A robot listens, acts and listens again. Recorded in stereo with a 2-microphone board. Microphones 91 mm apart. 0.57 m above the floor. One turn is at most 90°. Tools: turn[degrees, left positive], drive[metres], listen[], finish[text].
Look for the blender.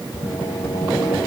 Action: listen[]
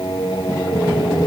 Action: listen[]
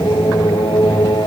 Action: finish[I can't make out a blender, only singing.]